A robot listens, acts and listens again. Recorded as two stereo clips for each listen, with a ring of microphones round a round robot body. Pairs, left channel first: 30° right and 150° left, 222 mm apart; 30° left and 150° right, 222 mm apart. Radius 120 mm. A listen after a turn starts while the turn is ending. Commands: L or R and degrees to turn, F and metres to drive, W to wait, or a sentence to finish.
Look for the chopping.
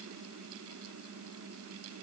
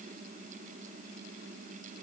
W
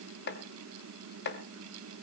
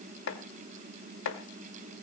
Facing the chopping, 1 to 2 m away.